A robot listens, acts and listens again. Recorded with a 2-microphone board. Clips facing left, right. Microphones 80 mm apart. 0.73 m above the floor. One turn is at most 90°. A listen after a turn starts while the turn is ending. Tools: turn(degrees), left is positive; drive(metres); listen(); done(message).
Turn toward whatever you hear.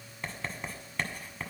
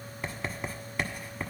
turn(degrees=-30)
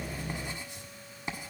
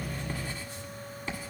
turn(degrees=25)
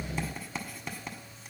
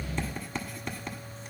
done("Facing the writing.")